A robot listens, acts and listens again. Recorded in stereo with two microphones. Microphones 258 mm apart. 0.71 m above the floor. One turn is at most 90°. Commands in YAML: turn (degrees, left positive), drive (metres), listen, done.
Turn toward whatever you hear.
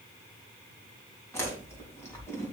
turn: 30
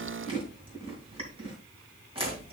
turn: -20
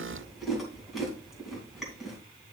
done: "Found it: chewing, straight ahead, 2 to 4 m away."